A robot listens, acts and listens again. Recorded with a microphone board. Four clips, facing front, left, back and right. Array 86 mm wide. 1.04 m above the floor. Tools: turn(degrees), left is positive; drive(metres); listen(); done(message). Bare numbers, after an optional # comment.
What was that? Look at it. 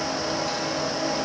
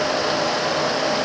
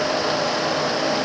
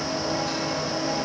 listen()
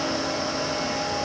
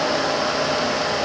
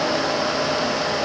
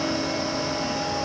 listen()
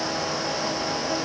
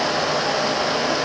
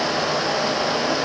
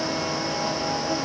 done("I can't make out anything to turn to.")